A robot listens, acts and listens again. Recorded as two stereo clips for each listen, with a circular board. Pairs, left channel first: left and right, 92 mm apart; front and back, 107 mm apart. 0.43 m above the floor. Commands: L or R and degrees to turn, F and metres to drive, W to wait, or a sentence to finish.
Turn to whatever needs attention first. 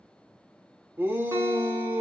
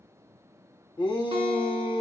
R25
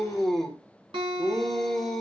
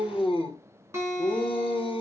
Facing the shout, 1 to 2 m away.